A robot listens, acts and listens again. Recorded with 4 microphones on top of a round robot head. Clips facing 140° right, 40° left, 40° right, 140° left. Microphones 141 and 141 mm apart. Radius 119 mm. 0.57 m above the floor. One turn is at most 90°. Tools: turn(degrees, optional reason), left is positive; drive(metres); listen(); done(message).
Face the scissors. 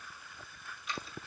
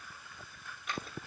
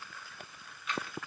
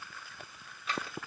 turn(degrees=80, reason="The scissors: 80° left.")
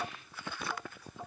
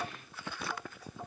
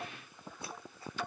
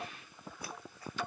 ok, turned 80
listen()
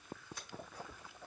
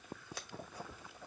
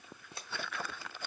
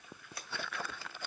turn(degrees=25, reason="The scissors is now 25° left.")
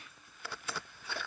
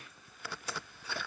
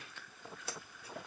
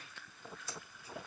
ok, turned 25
listen()
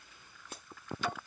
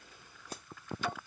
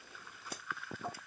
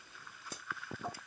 listen()
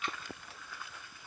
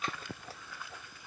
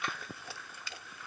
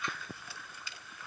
turn(degrees=-15, reason="The scissors is now 15° right.")
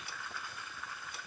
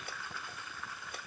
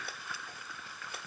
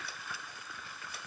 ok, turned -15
listen()
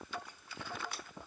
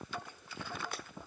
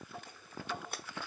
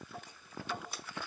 done("Facing the scissors, under 1 m away.")